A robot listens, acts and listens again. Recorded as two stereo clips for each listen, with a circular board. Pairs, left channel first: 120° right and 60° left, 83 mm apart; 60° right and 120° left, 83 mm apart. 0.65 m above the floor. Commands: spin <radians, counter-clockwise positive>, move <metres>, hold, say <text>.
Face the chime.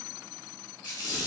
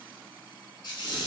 hold
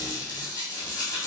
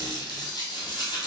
hold
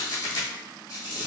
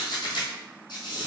say I can't make out a chime to turn to.